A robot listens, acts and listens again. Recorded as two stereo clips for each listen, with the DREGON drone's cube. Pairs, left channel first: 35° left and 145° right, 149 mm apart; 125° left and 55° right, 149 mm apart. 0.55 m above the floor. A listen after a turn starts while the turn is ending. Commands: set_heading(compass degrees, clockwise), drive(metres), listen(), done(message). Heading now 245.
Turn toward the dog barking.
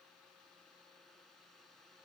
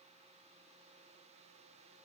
listen()
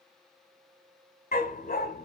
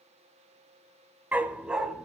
set_heading(215)
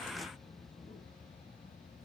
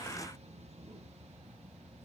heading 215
listen()
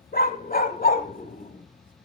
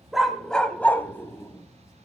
set_heading(170)
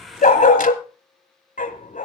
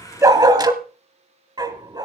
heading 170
done("Facing the dog barking, 1 to 2 m away.")